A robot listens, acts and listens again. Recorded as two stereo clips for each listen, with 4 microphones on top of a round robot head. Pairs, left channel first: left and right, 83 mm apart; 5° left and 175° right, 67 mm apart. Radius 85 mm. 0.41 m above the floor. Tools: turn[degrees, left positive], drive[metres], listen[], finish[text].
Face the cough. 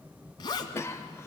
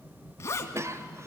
Thought: The cough: 145° left.
Action: turn[145]
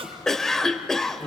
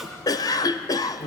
Action: finish[Found it: a cough, straight ahead.]